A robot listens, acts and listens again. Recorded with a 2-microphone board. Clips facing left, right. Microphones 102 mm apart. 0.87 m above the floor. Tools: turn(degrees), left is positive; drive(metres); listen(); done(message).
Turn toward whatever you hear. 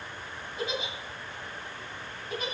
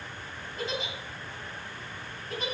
turn(degrees=30)
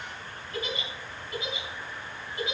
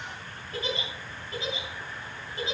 turn(degrees=-30)
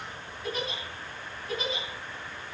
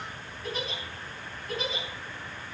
done("Facing the giggle, 2 to 4 m away.")